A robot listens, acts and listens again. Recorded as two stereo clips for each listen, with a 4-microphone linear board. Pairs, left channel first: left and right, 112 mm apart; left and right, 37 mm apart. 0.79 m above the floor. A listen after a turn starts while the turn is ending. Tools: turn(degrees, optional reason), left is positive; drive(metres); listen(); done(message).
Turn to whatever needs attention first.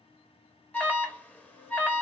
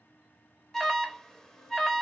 turn(degrees=30)
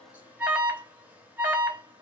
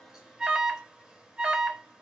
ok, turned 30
turn(degrees=-15, reason="So it is at 15° right.")
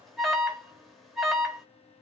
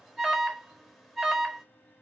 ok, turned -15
done("Found it: an alarm, straight ahead, under 1 m away.")